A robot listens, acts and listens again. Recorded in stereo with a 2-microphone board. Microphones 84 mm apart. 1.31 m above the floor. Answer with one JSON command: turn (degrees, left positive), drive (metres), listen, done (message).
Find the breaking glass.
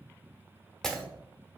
{"turn": 30}
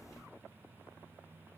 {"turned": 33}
{"listen": true}
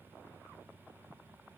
{"done": "I heard breaking glass, but can't make it out now. It was about 30° right or 140° left."}